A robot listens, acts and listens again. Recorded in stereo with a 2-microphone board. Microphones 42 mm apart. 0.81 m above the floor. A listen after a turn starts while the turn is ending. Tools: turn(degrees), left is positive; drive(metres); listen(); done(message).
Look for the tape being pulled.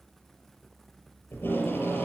turn(degrees=70)
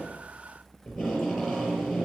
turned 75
done("Found it: tape being pulled, straight ahead.")